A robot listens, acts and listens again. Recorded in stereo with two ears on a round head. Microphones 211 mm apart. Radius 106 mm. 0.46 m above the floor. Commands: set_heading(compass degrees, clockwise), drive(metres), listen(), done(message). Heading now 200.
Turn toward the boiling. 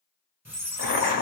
set_heading(150)
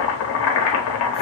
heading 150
set_heading(70)
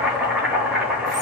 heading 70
done("Facing the boiling.")